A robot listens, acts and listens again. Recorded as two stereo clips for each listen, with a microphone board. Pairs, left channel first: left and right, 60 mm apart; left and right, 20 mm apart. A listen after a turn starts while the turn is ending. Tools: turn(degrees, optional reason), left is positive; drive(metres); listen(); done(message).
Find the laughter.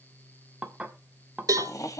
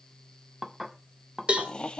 turn(degrees=60, reason="The laughter: about 60° left or 120° left.")
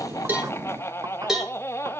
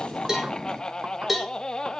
turn(degrees=45, reason="So it is at 45° left.")
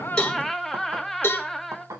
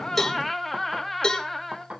done("Facing the laughter, 1 to 2 m away.")